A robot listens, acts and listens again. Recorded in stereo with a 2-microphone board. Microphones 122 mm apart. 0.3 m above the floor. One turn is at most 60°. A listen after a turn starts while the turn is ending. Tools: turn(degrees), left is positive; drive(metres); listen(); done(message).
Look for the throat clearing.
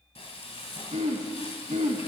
turn(degrees=-60)
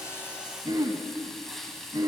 turn(degrees=-35)
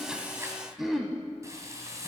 done("Found it: throat clearing, straight ahead.")